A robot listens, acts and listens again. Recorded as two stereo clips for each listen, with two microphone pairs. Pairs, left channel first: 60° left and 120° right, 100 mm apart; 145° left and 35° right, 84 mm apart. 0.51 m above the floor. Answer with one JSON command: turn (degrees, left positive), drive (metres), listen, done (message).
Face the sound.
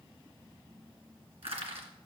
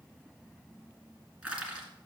{"turn": -110}
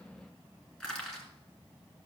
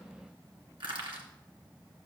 {"turn": -20}
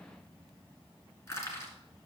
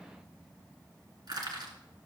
{"done": "Facing the crushing."}